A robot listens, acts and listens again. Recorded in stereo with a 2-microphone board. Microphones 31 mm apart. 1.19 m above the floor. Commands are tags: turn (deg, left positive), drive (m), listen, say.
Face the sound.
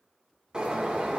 <turn deg="-20"/>
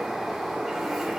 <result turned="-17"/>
<say>Facing the bird.</say>